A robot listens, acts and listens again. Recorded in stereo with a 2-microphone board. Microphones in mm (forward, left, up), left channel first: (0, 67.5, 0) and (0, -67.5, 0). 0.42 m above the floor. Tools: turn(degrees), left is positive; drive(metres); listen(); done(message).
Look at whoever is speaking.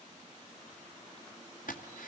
listen()
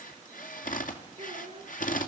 turn(degrees=-50)
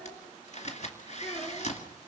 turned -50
done("Facing the child speaking, 2 to 4 m away.")